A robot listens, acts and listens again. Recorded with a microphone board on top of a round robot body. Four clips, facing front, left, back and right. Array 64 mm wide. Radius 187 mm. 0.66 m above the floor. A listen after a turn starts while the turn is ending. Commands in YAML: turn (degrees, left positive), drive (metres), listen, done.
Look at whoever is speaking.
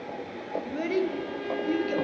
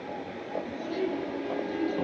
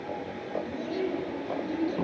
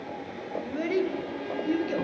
turn: -50
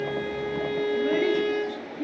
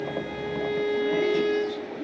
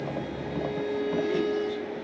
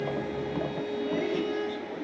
done: "Facing the child speaking, over 4 m away."